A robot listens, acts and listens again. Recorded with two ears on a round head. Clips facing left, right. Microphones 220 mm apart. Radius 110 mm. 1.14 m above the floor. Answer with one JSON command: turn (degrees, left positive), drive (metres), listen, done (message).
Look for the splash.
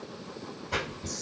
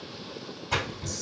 {"turn": -90}
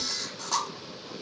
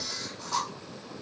{"done": "Facing where the splash came from. I can't hear it now."}